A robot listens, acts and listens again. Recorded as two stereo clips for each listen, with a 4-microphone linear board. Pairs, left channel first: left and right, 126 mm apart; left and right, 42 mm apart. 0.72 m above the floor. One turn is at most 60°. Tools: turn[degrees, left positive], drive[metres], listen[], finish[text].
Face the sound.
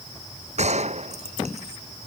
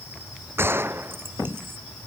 Thought: The gunshot: about 60° right or 120° right.
Action: turn[-60]
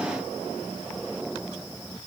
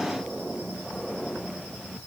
Action: listen[]
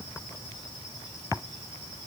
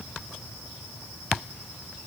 Action: finish[I heard a gunshot, but can't make it out now. It was about straight ahead or 60° right.]